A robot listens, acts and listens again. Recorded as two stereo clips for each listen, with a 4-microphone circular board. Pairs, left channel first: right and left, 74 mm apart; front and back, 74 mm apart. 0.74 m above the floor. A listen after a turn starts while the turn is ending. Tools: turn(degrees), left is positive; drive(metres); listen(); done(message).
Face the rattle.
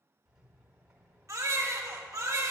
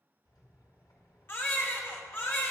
turn(degrees=10)
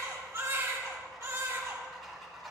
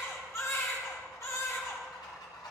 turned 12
done("Facing the rattle.")